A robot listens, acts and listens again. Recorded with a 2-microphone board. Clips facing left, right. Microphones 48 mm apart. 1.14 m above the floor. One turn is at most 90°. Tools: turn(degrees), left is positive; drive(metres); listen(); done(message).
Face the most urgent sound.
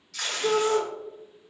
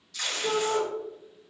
turn(degrees=35)
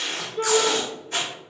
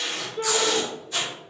done("Found it: a shout, straight ahead, under 1 m away.")